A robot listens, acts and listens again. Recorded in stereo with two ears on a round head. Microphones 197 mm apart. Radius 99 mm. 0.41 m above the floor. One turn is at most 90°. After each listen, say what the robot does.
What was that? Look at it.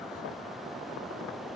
Keep listening.
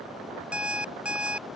Turn 30° right.
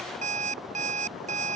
Turn 90° right.
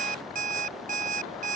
Turn 40° right.
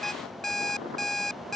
Facing the alarm clock.